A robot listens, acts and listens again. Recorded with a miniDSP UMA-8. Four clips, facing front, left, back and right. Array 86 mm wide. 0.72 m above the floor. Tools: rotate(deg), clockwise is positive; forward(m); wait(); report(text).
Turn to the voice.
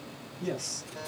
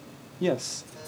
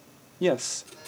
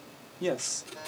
rotate(-165)
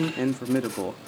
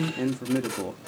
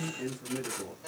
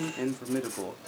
report("Found it: a man speaking, straight ahead, 1 to 2 m away.")